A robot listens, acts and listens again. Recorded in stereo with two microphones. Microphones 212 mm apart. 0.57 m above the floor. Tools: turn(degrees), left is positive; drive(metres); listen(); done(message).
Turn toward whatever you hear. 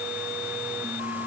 listen()
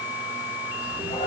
turn(degrees=25)
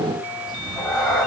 done("Found it: a cat meowing, straight ahead, 2 to 4 m away.")